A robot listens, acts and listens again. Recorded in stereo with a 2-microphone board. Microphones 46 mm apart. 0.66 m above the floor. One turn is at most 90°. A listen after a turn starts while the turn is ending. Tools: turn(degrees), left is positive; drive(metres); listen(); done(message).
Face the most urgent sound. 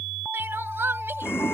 turn(degrees=-65)
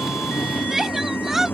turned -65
turn(degrees=-10)
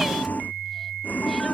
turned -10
listen()
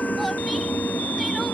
listen()
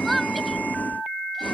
done("Facing the crying.")